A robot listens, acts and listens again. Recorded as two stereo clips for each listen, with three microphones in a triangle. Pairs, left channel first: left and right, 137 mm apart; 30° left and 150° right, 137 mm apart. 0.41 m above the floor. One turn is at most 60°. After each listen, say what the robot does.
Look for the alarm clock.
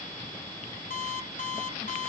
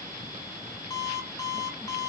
Turn 60° left.
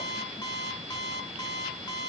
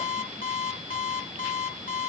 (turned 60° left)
Turn 30° left.
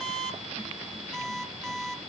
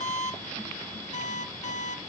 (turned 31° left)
Found it: an alarm clock, straight ahead, 1 to 2 m away.